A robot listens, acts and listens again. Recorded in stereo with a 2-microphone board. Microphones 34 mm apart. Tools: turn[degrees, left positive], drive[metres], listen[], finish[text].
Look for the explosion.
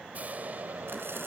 Thought: The explosion: about 50° right or 130° right.
Action: turn[-50]
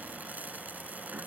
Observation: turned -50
Action: listen[]
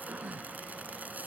Action: finish[I heard an explosion, but can't make it out now. It was about straight ahead or 80° right.]